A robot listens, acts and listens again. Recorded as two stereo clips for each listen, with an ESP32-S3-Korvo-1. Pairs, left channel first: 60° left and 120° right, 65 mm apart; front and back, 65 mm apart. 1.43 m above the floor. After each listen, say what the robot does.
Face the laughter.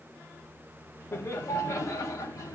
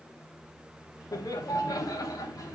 Turn 25° left.
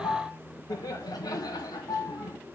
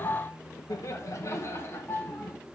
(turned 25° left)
Turn 55° left.
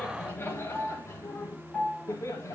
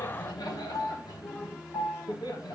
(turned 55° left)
Turn 15° left.
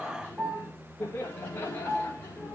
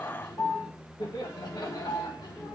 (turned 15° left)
Found it: laughter, straight ahead.